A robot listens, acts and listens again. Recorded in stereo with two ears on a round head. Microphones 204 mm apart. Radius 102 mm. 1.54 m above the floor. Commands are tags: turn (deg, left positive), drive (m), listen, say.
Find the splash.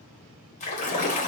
<turn deg="35"/>
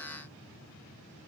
<listen/>
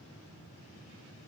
<say>I heard a splash, but can't make it out now. It was about straight ahead or 110° left.</say>